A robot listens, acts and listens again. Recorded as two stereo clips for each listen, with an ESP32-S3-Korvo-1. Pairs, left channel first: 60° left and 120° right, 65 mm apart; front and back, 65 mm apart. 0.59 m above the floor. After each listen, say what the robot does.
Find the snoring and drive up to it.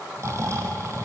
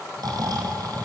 Turn 165° right.
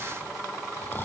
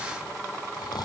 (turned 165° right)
Drive 1.0 m forward.
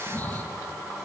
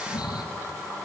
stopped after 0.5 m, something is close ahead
Something is in my way. I am facing the snoring but have not reached it.